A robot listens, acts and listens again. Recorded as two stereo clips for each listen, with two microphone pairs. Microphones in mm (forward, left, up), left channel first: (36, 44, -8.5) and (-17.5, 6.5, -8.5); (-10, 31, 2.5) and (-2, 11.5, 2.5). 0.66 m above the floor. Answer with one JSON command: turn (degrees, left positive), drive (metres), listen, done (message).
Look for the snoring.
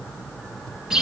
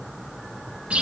{"listen": true}
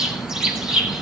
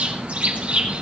{"listen": true}
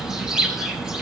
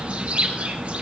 {"done": "I can't make out snoring, only a bird."}